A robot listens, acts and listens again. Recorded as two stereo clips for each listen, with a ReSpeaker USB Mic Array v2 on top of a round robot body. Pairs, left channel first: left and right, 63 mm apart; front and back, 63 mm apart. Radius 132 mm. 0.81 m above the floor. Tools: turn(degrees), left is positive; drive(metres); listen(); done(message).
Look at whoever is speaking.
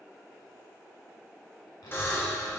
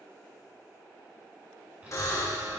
turn(degrees=110)
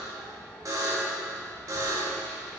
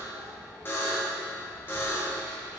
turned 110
turn(degrees=15)
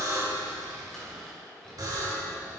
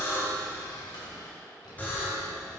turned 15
done("Found it: a child speaking, straight ahead.")